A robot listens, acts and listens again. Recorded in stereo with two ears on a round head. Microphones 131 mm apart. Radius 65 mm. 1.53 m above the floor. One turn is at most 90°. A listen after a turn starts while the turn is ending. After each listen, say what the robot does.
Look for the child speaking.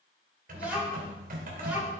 Turn 30° right.
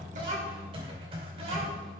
Keep listening.
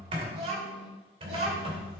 Turn 90° right.
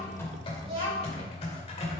Turn 35° right.
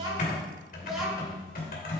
Found it: a child speaking, straight ahead, over 4 m away.